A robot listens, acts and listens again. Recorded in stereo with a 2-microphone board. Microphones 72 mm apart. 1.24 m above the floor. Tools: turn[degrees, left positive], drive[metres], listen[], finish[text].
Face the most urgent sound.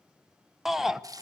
Action: turn[-30]
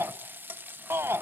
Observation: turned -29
Thought: So it is at 145° right.
Action: turn[-145]
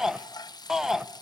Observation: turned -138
Thought: The shout is now 10° right.
Action: turn[-10]
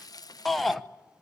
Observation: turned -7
Action: finish[Facing the shout, 1 to 2 m away.]